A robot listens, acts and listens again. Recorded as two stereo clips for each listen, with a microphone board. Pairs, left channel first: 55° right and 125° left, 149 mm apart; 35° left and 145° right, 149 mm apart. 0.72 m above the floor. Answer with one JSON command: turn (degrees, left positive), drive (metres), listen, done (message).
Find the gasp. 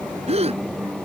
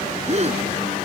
{"turn": 170}
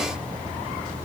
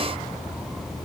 {"done": "I heard a gasp from this way, but can't make it out now."}